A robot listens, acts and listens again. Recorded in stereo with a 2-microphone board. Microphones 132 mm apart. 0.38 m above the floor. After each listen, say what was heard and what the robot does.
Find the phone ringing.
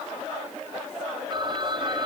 The phone ringing: about 35° right or 145° right. Turn 35° right.
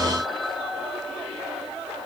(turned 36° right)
Found it: a phone ringing, straight ahead.